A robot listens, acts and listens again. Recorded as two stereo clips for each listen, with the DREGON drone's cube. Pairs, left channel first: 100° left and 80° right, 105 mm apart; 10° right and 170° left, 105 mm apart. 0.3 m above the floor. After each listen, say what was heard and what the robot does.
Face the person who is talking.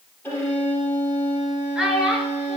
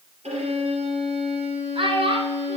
The child speaking: 165° right. Turn 165° right.
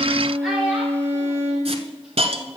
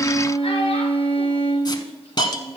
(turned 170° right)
Keep listening.
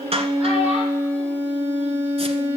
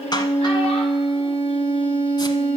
Keep listening.
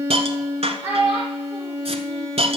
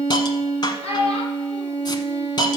Facing the child speaking, over 4 m away.